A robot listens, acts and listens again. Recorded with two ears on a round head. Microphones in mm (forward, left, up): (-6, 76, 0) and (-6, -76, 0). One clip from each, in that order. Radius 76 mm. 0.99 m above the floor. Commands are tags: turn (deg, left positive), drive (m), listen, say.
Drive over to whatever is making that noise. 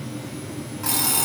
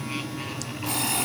<turn deg="90"/>
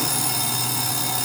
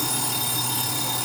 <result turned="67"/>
<turn deg="15"/>
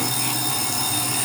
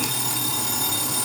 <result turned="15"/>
<drive m="1.0"/>
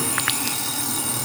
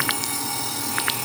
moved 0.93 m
<drive m="1.0"/>
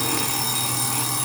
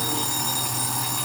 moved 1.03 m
<drive m="1.0"/>
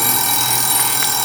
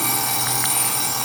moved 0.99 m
<turn deg="15"/>
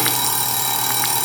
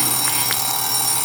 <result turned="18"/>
<drive m="1.0"/>
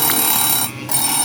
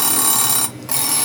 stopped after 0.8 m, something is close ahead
<turn deg="-15"/>
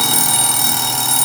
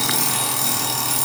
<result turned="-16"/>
<say>I am next to the alarm clock.</say>